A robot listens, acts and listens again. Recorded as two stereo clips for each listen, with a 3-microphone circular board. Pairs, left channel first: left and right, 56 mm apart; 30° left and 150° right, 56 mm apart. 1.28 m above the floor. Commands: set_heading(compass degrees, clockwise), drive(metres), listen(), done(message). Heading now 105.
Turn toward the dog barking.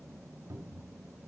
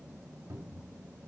listen()
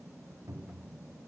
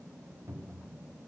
listen()
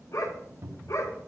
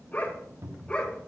set_heading(5)
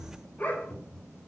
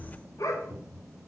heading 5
set_heading(330)
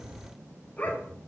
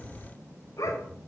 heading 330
set_heading(300)
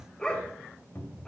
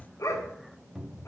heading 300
set_heading(285)
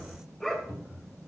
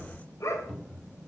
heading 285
done("Facing the dog barking.")